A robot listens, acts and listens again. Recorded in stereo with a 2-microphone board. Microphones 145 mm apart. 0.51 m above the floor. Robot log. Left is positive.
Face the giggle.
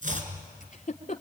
note: The giggle: about 60° left or 120° left.
cmd yaw +60
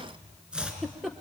end: Facing the giggle.